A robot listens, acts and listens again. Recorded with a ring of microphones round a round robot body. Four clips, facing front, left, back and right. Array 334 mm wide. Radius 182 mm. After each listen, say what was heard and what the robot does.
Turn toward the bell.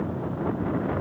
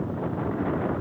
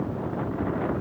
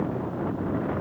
Keep listening.
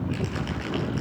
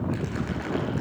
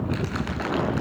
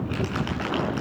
Keep listening.
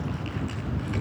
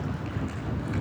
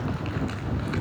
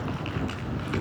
I can't make out a bell to turn to.